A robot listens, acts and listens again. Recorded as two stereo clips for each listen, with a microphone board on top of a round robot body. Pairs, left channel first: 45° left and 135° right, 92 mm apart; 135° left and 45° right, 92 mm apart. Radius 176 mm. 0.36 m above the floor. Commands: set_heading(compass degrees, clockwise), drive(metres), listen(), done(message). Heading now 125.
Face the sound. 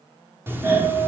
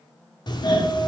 set_heading(325)
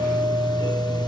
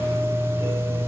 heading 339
set_heading(324)
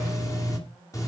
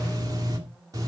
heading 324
done("Facing the doorbell, 2 to 4 m away.")